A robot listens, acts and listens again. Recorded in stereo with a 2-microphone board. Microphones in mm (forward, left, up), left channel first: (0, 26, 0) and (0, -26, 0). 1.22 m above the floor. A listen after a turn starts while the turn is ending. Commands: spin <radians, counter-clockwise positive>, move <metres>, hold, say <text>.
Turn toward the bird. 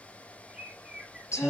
spin -0.52
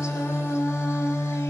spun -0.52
hold
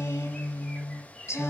hold
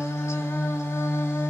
say I heard a bird, but can't make it out now. It was about 15° left or 135° right.